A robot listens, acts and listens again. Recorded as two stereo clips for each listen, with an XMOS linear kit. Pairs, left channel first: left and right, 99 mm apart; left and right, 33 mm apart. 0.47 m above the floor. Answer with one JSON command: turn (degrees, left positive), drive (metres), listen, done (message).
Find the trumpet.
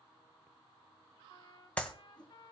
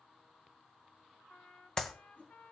{"turn": 50}
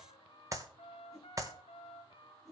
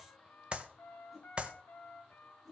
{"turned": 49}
{"turn": 80}
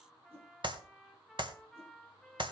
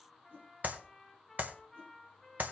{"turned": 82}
{"done": "Found it: a trumpet, straight ahead."}